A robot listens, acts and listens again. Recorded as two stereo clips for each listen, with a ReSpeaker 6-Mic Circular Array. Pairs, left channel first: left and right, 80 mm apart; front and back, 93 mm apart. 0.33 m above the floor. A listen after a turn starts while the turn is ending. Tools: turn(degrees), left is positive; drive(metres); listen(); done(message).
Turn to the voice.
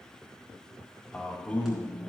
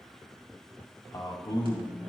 turn(degrees=25)
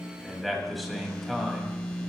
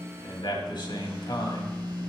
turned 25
done("Facing the man speaking.")